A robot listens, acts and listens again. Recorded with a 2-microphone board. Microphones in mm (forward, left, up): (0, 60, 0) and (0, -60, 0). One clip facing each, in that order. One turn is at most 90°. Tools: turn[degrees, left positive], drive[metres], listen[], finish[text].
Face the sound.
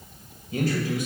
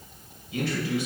Thought: The man speaking: about 45° left or 135° left.
Action: turn[45]
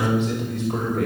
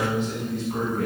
Thought: So it is at 75° left.
Action: turn[75]
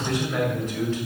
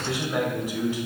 Thought: The man speaking is now 15° right.
Action: turn[-15]
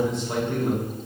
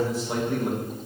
Thought: The man speaking is now 10° right.
Action: turn[-10]
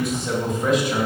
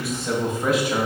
Action: finish[Found it: a man speaking, straight ahead.]